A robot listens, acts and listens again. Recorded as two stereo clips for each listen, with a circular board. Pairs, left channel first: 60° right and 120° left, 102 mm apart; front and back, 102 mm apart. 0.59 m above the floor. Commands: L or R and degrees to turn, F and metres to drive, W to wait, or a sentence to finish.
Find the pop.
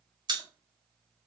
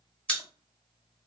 L80
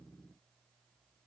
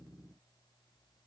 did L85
Facing where the pop came from. I can't hear it now.